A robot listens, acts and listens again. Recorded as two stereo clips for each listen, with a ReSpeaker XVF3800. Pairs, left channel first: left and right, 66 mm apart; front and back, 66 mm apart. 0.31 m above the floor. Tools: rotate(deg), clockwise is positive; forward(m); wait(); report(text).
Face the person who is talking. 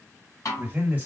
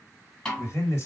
rotate(25)
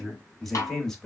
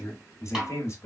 rotate(-10)
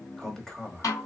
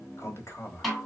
rotate(-15)
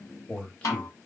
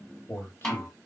rotate(-30)
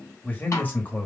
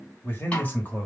rotate(-50)
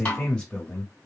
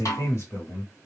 rotate(-20)
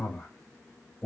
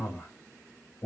report("Found it: a man speaking, straight ahead.")